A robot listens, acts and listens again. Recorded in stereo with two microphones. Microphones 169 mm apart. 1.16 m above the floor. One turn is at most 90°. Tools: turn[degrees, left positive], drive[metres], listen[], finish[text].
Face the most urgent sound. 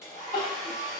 Thought: The crying: about 40° left or 140° left.
Action: turn[40]
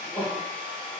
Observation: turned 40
Thought: So it is at 15° left.
Action: turn[15]
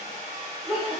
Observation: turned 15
Action: finish[Found it: crying, straight ahead.]